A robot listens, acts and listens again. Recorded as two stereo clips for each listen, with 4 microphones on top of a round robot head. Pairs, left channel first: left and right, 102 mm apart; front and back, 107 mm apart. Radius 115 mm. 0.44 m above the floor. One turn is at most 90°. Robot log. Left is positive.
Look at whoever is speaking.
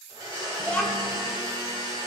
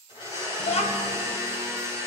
note: The child speaking: 10° left.
cmd yaw +10
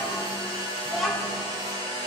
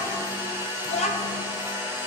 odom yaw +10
end: Found it: a child speaking, straight ahead.